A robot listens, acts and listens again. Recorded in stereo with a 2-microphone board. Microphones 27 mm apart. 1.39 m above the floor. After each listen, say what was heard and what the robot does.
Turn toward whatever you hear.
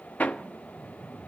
The hammering: about 60° left or 120° left. Turn 60° left.
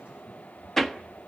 So it is at 10° left. Turn 10° left.
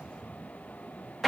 Facing the hammering.